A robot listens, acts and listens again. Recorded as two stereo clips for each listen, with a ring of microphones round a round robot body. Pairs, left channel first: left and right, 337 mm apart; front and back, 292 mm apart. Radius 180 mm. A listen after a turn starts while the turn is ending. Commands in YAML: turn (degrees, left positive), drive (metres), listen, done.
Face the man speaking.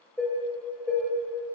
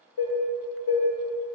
listen: true
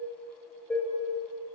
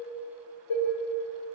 listen: true
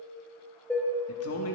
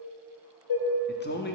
turn: 50
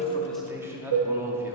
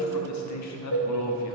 turn: -10
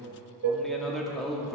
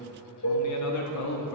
done: "Found it: a man speaking, straight ahead."